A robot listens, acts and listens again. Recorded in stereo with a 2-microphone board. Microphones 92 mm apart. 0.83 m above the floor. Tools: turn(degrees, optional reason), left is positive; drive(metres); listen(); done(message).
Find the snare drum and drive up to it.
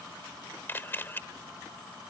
listen()
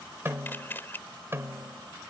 turn(degrees=-30, reason="The snare drum: about 30° right or 150° right.")
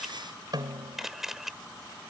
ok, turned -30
turn(degrees=-120, reason="So it is at 120° right.")
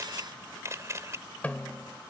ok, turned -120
turn(degrees=20, reason="The snare drum is now 20° left.")
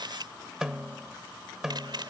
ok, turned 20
drive(metres=1.0)
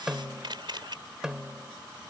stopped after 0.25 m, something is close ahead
done("Blocked. The snare drum is further on, straight ahead.")